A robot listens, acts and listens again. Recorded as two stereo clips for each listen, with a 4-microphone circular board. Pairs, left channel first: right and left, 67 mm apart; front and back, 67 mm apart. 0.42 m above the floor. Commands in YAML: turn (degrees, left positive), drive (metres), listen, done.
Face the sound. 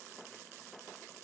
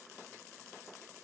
listen: true
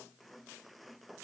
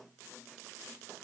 listen: true
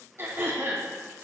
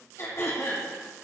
turn: 45
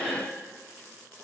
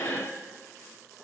turn: 15
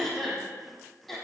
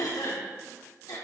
done: "Facing the throat clearing."